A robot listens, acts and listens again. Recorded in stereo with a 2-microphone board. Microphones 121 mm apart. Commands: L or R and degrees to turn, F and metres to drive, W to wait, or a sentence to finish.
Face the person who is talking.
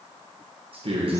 R55
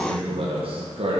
R65
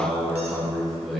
Facing the man speaking, 1 to 2 m away.